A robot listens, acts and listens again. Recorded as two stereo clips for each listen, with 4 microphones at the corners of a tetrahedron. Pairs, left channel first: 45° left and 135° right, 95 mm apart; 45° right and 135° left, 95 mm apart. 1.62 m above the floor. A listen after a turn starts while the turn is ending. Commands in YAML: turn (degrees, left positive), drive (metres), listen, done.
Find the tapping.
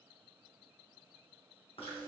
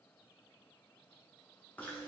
listen: true
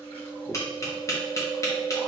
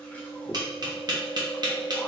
turn: 95
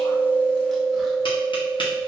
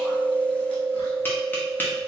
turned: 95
listen: true
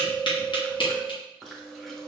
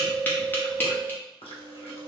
turn: 25
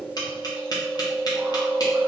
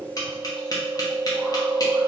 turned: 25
done: "Found it: tapping, straight ahead, under 1 m away."